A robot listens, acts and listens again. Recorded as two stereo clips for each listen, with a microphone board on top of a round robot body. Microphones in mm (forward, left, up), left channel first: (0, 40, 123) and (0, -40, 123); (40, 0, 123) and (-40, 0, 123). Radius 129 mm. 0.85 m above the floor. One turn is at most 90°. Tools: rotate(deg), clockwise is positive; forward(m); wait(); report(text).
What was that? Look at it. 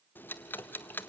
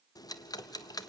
rotate(-25)
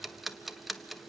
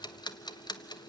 report("Found it: ticking, straight ahead, 1 to 2 m away.")